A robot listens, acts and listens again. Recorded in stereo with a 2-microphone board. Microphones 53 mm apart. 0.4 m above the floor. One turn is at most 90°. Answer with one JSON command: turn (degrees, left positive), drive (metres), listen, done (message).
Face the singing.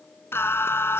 {"turn": 50}
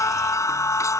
{"turn": 70}
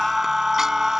{"turn": -10}
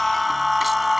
{"done": "Found it: singing, straight ahead."}